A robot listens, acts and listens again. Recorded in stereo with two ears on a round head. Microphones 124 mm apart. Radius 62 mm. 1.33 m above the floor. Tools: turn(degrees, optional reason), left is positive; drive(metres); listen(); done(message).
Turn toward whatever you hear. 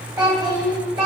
turn(degrees=-30, reason="The child speaking: about 30° right or 150° right.")
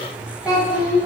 turn(degrees=-10, reason="So it is at 10° right.")
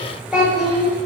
turn(degrees=-10, reason="The child speaking is now 10° right.")
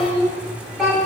done("Found it: a child speaking, straight ahead, 2 to 4 m away.")